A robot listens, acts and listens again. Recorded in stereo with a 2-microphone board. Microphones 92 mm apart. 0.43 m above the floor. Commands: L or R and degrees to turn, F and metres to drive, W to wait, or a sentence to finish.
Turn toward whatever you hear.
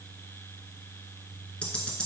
L30
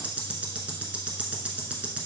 R15
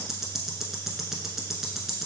Facing the ticking.